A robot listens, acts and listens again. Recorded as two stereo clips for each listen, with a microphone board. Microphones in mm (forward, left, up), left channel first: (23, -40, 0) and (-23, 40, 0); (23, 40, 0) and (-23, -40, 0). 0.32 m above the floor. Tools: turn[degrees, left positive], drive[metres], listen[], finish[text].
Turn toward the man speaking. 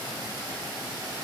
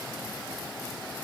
Action: listen[]
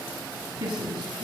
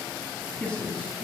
Thought: The man speaking: 145° left.
Action: turn[145]
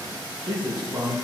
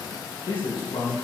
Thought: The man speaking is now 65° left.
Action: turn[65]
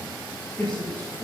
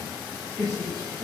Thought: The man speaking is now 10° right.
Action: turn[-10]
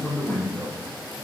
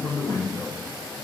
Action: finish[Facing the man speaking, over 4 m away.]